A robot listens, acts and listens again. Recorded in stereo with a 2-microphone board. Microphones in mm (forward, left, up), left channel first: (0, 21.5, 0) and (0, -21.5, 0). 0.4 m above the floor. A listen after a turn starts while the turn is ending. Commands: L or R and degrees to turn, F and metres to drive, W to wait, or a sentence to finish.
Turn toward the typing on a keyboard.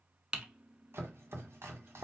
R25
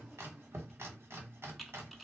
Found it: typing on a keyboard, straight ahead, under 1 m away.